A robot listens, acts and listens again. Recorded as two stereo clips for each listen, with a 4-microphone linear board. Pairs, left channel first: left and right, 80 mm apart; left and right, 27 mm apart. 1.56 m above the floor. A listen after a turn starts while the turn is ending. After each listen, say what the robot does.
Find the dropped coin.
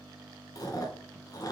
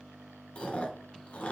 Keep listening.
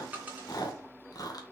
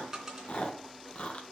Turn 20° right.
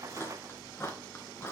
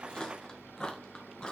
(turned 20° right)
Keep listening.
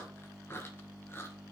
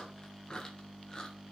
I heard a dropped coin, but can't make it out now. It was about straight ahead or 140° right.